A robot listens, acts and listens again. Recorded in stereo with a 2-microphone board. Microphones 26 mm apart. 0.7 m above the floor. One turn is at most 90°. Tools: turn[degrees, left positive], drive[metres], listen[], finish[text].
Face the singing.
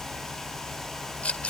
Action: listen[]
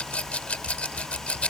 Action: listen[]
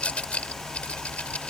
Action: finish[I can't make out singing, only a rattle.]